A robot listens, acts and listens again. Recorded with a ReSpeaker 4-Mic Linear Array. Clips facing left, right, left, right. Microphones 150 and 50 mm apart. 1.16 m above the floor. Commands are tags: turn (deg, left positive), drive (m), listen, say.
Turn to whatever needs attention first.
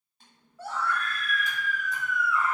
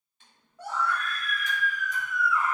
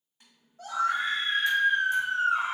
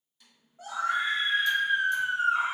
<turn deg="-15"/>
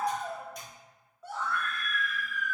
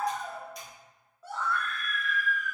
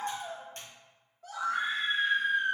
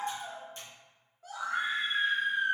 <say>Found it: a scream, straight ahead, 1 to 2 m away.</say>